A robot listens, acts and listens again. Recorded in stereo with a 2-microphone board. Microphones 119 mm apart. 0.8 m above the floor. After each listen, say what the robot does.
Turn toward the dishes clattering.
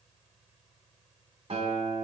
Keep listening.
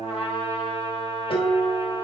Turn 50° left.
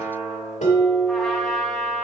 Turn 80° left.
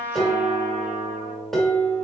Facing the dishes clattering.